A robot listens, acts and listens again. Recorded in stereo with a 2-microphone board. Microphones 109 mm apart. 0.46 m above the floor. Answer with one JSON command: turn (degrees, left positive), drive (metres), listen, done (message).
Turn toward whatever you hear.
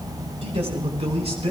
{"turn": -90}
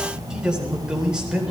{"turn": -10}
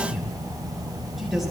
{"done": "Facing the man speaking."}